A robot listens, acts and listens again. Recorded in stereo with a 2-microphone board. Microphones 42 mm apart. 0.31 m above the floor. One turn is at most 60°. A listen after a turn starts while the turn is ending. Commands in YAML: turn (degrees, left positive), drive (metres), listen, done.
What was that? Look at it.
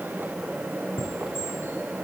turn: 60
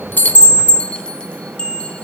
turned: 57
turn: 30
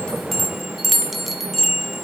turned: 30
done: "Facing the chime."